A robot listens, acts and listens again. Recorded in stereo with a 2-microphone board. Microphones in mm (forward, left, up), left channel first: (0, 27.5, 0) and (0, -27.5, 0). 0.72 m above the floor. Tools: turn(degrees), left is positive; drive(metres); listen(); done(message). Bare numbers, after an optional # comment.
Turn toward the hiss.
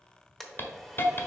# The hiss: about 40° left or 140° left.
turn(40)
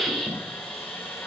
done("Facing the hiss, 1 to 2 m away.")